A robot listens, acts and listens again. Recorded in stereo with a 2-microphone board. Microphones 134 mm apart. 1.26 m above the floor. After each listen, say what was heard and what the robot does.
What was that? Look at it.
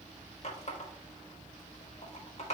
The running tap: about 55° left or 125° left. Turn 55° left.
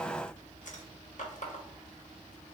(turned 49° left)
So it is at 70° left. Turn 70° left.
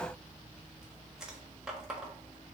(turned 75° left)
Found it: a running tap, straight ahead, 1 to 2 m away.